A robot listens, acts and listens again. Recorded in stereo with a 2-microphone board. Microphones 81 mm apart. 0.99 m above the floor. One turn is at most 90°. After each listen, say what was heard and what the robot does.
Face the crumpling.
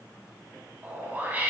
Keep listening.
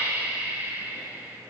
Keep listening.
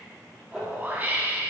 Turn 30° left.
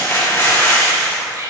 So it is at 145° left. Turn 90° left.
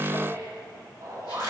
Nothing new. It was at 55° left. Turn 55° left.
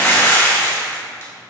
The crumpling is now 35° left. Turn 35° left.
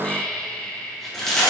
Facing the crumpling, 2 to 4 m away.